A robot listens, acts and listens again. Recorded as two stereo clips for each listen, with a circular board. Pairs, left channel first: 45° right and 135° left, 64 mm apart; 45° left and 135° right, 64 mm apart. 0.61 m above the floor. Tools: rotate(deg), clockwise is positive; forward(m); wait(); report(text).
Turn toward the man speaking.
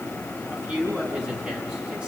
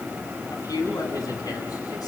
rotate(-60)
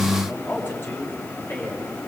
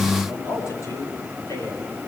rotate(-10)
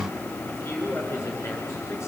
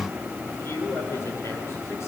report("Found it: a man speaking, straight ahead.")